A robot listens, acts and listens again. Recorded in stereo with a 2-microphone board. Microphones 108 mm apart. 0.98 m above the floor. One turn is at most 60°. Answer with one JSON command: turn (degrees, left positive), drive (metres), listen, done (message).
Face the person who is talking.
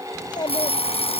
{"turn": 45}
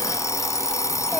{"listen": true}
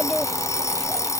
{"done": "Facing the child speaking."}